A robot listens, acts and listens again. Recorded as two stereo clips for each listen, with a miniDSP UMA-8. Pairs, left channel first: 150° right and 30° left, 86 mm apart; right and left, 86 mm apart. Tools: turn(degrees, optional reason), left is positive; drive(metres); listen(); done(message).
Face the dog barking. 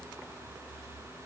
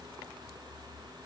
listen()
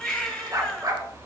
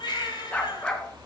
turn(degrees=-15, reason="The dog barking: 15° right.")
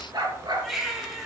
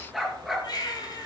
done("Facing the dog barking, 2 to 4 m away.")